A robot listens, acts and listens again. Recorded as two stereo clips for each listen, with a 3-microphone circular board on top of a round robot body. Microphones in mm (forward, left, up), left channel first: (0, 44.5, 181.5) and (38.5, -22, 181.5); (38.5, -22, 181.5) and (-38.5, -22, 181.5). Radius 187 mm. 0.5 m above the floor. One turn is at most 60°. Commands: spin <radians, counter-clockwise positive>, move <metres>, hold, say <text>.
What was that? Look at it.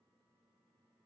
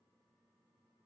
hold
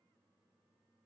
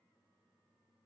hold
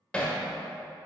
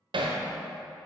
spin -1.05
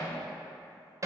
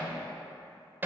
spin -1.05
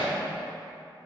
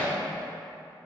spin -1.05
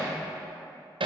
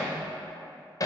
spin -0.79
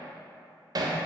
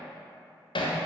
spin -0.35
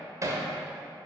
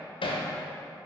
say Found it: hammering, straight ahead.